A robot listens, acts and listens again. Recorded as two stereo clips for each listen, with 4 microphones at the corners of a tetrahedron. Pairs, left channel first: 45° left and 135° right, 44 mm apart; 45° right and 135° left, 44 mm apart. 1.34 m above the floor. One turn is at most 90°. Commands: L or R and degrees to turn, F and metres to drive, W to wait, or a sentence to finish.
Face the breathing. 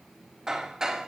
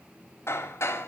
W
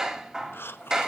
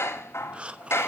L70
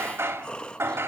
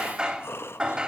R25
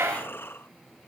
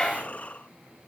L10
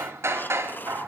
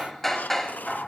Found it: breathing, straight ahead, 1 to 2 m away.